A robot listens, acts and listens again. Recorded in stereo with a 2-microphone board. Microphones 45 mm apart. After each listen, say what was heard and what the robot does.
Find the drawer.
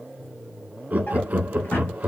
The drawer: about 55° left or 125° left. Turn 55° left.
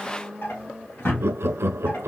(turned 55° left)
So it is at 65° left. Turn 65° left.
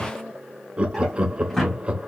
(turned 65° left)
Facing the drawer, 1 to 2 m away.